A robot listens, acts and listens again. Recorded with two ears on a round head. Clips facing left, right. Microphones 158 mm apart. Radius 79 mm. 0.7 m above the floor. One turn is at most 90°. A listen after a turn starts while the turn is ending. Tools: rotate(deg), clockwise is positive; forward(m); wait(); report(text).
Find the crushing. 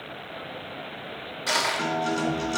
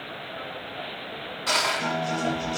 rotate(-30)
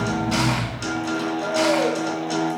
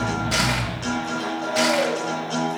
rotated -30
wait()
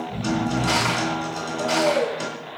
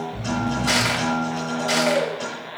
rotate(15)
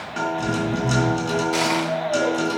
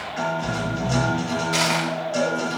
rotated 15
report("Facing the crushing, 1 to 2 m away.")